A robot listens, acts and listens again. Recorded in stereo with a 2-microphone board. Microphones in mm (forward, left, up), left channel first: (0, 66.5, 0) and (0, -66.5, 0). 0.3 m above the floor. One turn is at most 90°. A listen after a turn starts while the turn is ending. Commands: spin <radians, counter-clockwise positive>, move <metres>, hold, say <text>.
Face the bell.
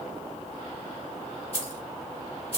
hold
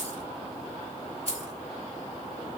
hold
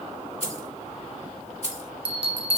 spin -0.79
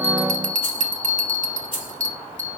spin -1.57
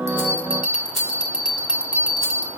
spin -0.17
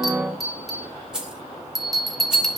say Facing the bell, 1 to 2 m away.